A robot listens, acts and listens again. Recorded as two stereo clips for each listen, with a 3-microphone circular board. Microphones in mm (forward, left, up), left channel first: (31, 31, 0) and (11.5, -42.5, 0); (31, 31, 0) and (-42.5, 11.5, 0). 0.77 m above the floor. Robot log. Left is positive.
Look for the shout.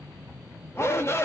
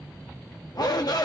note: The shout: 25° left.
cmd yaw +25
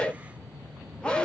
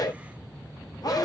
end: Facing the shout, under 1 m away.